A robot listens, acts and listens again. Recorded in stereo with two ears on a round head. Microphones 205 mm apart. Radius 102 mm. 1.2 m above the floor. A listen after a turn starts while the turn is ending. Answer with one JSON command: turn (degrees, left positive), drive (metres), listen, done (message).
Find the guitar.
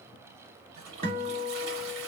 {"turn": -30}
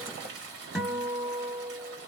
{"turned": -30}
{"done": "Facing the guitar."}